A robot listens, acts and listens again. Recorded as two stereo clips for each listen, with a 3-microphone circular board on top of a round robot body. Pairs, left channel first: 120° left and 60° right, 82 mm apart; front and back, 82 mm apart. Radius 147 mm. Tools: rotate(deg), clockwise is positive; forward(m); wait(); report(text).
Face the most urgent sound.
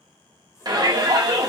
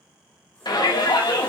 rotate(30)
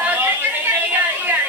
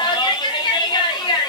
report("Facing the shout.")